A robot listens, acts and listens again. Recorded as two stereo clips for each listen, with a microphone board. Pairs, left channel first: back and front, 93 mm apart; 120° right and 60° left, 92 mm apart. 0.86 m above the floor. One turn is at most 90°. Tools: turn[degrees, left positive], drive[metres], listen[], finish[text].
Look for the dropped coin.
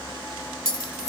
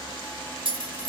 Thought: The dropped coin: 50° left.
Action: turn[50]
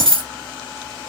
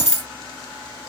Action: finish[Facing the dropped coin, 1 to 2 m away.]